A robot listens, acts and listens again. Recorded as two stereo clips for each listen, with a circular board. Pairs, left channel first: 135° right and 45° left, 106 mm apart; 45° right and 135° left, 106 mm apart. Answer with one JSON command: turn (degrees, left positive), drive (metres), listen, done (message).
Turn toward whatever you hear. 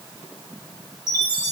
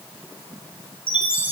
{"done": "Found it: a chime, straight ahead."}